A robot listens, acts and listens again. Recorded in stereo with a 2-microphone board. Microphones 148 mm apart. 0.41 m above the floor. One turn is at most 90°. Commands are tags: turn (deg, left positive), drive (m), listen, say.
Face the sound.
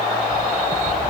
<turn deg="-50"/>
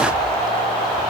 <listen/>
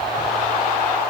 <listen/>
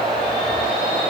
<say>I heard a bird, but can't make it out now. It was about straight ahead or 80° right.</say>